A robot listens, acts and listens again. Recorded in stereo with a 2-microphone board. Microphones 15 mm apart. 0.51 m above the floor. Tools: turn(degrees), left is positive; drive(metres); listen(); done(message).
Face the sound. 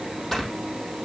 turn(degrees=30)
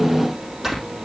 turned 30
turn(degrees=-20)
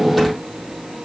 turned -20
listen()
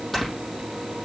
done("Facing the snoring.")